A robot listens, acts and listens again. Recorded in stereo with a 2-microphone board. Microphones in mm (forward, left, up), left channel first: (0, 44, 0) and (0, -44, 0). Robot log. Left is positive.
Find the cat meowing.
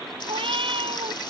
cmd yaw -90
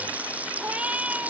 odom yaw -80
note: So it is at 15° right.
cmd yaw -15
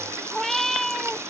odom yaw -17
end: Facing the cat meowing.